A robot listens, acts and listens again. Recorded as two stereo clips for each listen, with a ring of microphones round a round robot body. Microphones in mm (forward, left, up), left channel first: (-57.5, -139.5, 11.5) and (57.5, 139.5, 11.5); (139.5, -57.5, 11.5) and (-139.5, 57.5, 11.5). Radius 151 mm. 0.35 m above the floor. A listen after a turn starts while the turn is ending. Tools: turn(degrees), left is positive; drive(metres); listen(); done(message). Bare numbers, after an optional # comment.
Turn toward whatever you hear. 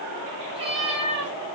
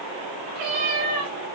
# The cat meowing: 140° left.
turn(140)
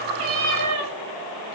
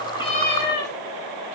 # The cat meowing is now 35° left.
turn(35)
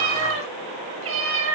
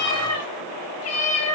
# The cat meowing is now 20° left.
turn(20)
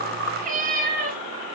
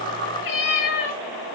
done("Facing the cat meowing.")